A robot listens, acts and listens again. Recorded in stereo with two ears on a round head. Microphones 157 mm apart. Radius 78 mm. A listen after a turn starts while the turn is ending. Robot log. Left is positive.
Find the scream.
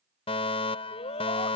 note: The scream: about 40° left or 140° left.
cmd yaw +40
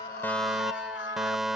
note: So it is at 100° left.
cmd yaw +100
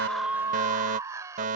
note: The scream is now 20° right.
cmd yaw -20
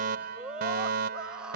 end: Facing the scream.